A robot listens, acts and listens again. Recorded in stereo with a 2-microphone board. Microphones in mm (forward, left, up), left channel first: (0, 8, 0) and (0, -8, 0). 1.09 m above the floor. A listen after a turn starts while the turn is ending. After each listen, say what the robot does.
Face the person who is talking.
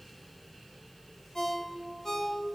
Keep listening.
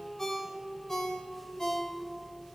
Keep listening.
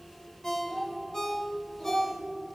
Turn 40° left.
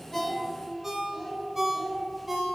Found it: a child speaking, straight ahead.